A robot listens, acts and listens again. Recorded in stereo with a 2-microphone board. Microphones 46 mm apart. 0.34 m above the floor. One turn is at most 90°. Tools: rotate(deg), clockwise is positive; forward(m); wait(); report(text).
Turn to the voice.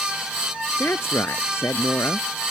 rotate(-70)
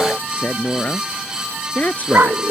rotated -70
rotate(-35)
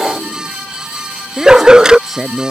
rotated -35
report("Facing the woman speaking.")